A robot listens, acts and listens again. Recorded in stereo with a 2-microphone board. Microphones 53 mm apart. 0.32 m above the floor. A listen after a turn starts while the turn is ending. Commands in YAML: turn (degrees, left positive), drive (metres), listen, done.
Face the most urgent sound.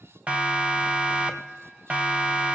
turn: -20
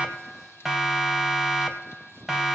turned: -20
done: "Found it: a siren, straight ahead, 2 to 4 m away."